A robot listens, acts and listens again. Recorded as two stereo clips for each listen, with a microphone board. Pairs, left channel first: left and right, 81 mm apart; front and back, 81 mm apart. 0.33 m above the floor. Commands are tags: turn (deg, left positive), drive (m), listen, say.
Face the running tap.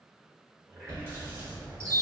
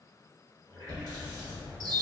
<turn deg="-35"/>
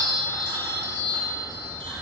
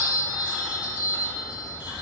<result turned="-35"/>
<listen/>
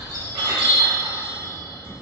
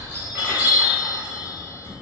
<listen/>
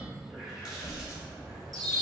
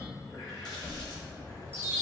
<turn deg="-10"/>
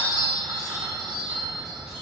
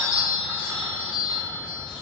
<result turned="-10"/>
<listen/>
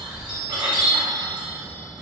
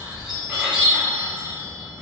<listen/>
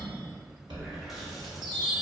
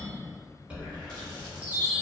<say>Facing where the running tap came from. I can't hear it now.</say>